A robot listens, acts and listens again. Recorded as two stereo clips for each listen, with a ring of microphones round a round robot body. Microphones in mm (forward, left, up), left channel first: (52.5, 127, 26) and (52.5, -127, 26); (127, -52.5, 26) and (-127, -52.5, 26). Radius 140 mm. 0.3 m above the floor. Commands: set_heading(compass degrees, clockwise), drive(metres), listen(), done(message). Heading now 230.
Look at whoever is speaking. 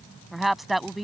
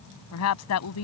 done("Facing the woman speaking.")